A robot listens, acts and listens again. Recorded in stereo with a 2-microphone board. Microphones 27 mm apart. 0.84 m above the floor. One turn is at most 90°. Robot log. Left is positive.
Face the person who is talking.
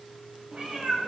cmd idle
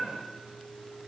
cmd idle
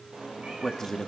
note: The man speaking: about 20° left or 160° left.
cmd yaw +20
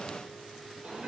cmd idle
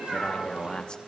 note: So it is at 140° left.
cmd yaw +90
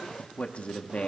note: The man speaking is now 65° left.
cmd yaw +65
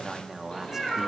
note: The man speaking is now 20° right.
cmd yaw -20
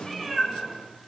cmd idle
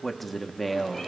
end: Facing the man speaking.